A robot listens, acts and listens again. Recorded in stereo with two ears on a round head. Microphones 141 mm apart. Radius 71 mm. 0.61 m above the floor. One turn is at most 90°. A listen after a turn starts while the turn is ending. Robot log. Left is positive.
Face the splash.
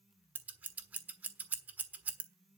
cmd idle
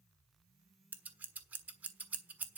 cmd idle
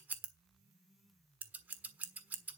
end: I can't make out a splash, only scissors.